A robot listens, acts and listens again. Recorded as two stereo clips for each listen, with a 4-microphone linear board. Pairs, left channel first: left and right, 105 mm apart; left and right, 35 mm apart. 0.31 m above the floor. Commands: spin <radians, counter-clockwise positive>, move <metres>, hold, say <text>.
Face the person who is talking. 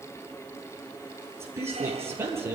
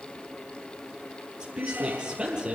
spin -0.44
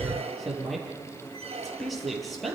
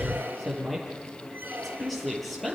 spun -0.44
say Found it: a woman speaking, straight ahead, over 4 m away.